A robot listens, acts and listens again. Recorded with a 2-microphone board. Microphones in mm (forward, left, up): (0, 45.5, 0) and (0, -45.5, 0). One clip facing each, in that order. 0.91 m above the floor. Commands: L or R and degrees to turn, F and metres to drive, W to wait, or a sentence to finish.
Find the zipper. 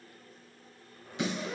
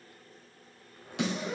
R20
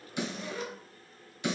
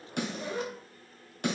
R135
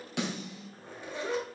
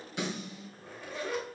L20
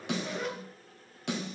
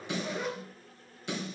Found it: a zipper, straight ahead.